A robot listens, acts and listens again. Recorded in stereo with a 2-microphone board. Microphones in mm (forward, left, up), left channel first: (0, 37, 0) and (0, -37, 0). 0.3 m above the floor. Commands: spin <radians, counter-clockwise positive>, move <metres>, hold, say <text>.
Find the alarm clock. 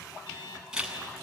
spin 1.57
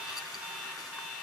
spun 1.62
spin -0.17
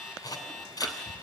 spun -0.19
say Facing the alarm clock.